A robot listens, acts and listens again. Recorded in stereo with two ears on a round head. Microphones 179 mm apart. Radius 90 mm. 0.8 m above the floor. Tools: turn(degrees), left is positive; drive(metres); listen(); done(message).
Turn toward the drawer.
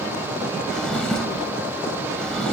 turn(degrees=30)
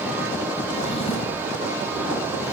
listen()
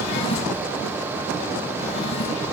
turn(degrees=145)
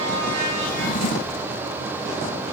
turn(degrees=50)
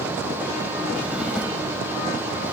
listen()
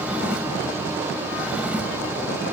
done("Found it: a drawer, straight ahead.")